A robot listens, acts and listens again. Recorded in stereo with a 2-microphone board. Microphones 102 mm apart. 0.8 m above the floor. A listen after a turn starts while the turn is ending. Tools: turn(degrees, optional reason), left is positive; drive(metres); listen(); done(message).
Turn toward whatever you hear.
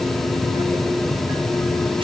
listen()
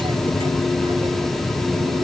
listen()
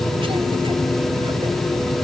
done("I can't make out anything.")